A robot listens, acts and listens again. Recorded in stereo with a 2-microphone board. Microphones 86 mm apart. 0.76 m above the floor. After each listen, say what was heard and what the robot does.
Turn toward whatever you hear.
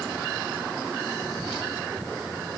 Keep listening.
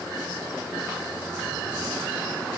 Keep listening.
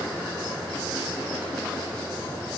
I can't make out anything.